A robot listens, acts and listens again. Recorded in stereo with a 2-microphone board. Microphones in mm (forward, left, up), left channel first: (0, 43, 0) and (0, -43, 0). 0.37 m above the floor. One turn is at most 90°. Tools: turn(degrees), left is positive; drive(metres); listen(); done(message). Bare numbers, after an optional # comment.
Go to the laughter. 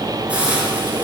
listen()
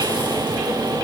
listen()
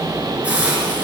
done("I can't make out laughter, only a hiss.")